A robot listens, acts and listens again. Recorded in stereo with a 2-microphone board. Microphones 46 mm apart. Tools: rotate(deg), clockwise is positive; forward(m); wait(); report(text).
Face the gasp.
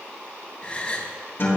rotate(-25)
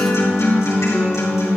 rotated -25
wait()
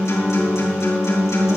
report("I heard a gasp, but can't make it out now. It was about straight ahead or 130° left.")